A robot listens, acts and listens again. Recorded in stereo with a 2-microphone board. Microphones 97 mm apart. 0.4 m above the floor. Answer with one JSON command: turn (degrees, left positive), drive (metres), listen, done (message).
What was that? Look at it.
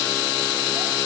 {"listen": true}
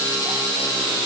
{"listen": true}
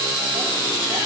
{"done": "I can't make out anything."}